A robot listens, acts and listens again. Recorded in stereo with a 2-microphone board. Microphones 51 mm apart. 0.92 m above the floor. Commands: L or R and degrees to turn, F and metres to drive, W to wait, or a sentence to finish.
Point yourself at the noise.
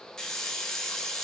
L30
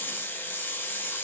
L140
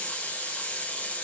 L25
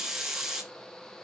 R10
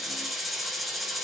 Facing the hiss, under 1 m away.